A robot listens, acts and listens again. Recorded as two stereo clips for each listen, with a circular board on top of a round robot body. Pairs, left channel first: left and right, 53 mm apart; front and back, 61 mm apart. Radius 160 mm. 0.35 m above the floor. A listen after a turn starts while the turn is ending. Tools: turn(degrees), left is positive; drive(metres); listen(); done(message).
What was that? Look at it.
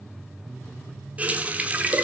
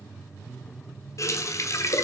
turn(degrees=-30)
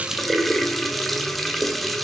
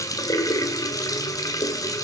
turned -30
done("Facing the running tap.")